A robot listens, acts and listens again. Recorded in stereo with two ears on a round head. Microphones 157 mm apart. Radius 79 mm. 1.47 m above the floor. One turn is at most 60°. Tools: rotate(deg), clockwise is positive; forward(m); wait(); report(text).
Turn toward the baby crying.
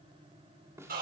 wait()
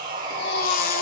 rotate(-55)
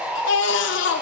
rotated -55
rotate(-60)
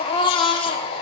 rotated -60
rotate(-30)
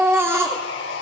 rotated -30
rotate(15)
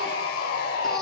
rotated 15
report("Facing the baby crying, 2 to 4 m away.")